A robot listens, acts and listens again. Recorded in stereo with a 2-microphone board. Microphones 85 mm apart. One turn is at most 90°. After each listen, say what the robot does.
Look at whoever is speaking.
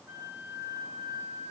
Keep listening.
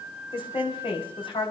Turn 90° left.
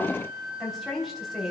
Facing the woman speaking, 2 to 4 m away.